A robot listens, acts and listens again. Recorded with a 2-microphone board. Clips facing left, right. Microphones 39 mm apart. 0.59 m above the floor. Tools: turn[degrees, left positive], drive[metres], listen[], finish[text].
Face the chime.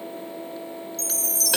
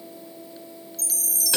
Action: turn[-30]
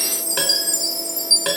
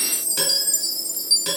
Thought: So it is at 145° right.
Action: turn[-145]
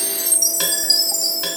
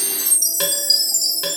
Action: finish[Found it: a chime, straight ahead.]